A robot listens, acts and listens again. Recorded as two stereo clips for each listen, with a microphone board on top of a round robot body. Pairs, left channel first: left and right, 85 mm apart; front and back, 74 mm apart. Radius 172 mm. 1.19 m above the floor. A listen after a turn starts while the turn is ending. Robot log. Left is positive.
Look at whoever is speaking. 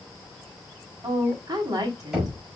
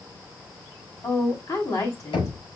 note: The woman speaking: 45° right.
cmd yaw -45
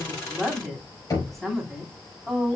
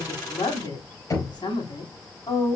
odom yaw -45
end: Found it: a woman speaking, straight ahead.